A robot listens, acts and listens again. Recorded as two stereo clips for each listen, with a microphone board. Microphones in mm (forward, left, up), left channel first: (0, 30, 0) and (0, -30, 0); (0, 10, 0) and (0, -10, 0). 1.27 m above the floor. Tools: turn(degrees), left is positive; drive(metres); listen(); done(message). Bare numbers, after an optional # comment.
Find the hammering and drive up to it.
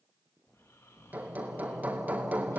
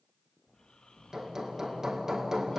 # The hammering: about 25° right or 155° right.
turn(-25)
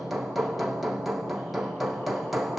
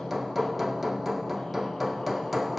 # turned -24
drive(1.0)
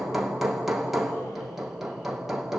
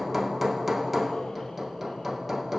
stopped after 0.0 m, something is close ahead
done("Blocked. The hammering is further on, straight ahead.")